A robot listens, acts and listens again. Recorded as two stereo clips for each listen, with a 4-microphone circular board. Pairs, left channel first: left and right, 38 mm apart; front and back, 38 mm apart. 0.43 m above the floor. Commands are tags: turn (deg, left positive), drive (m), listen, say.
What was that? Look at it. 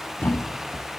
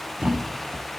<turn deg="120"/>
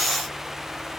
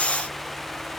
<say>Facing where the thud came from. I can't hear it now.</say>